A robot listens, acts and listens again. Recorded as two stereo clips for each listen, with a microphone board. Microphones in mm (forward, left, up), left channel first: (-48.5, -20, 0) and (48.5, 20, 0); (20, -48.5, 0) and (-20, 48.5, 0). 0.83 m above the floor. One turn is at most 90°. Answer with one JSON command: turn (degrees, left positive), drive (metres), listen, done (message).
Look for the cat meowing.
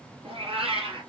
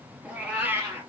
{"turn": 50}
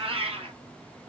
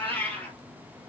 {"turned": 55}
{"turn": 10}
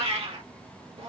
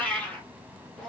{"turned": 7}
{"turn": 15}
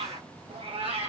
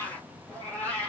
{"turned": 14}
{"turn": 10}
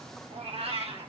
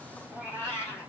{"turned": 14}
{"done": "Found it: a cat meowing, straight ahead, 2 to 4 m away."}